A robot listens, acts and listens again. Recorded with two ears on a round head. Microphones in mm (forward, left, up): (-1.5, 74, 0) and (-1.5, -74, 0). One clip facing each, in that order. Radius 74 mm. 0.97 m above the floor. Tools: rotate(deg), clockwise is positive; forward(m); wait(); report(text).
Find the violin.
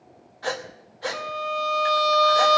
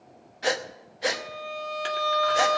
rotate(-55)
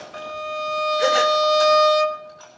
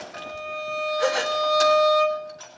rotate(-65)
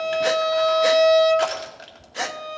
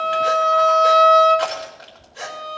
rotate(-10)
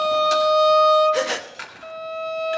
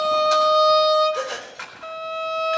report("Facing the violin.")